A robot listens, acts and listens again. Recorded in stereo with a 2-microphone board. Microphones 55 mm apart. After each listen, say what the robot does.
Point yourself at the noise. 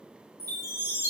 Turn 65° left.
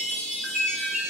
Turn 10° left.
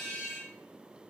Facing the chime.